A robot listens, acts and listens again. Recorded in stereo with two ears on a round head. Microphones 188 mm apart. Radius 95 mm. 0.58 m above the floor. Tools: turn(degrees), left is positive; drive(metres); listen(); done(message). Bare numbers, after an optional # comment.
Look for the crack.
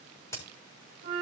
# The crack: about 15° left or 165° left.
turn(15)
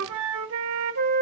listen()
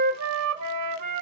done("I heard a crack, but can't make it out now. It was about straight ahead or 150° left.")